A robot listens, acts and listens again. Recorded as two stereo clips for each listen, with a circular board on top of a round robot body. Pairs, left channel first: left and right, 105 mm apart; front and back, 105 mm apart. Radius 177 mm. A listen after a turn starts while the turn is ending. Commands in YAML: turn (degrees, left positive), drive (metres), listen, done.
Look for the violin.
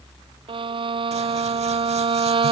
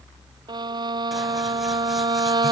turn: -130
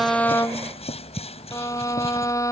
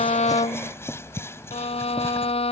turn: 30
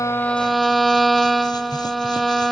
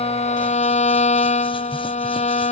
done: "Found it: a violin, straight ahead."